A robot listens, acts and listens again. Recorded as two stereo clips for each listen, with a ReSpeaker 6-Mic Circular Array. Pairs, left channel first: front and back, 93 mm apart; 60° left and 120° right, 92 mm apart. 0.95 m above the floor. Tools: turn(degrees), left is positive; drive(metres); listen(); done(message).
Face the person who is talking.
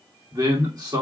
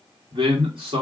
turn(degrees=-135)
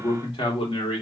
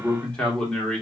turn(degrees=-20)
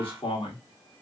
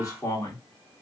turn(degrees=10)
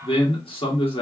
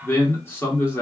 done("Found it: a man speaking, straight ahead.")